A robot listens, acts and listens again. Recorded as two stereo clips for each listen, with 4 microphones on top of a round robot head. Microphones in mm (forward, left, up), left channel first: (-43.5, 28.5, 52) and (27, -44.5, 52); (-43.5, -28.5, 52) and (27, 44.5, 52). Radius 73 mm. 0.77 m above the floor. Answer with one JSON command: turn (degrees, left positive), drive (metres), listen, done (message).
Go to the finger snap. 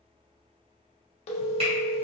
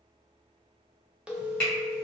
{"turn": -50}
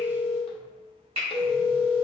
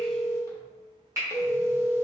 {"turn": -15}
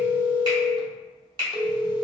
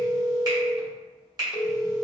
{"drive": 1.0}
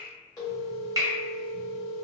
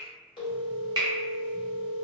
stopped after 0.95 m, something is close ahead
{"done": "Arrived at the finger snap, straight ahead."}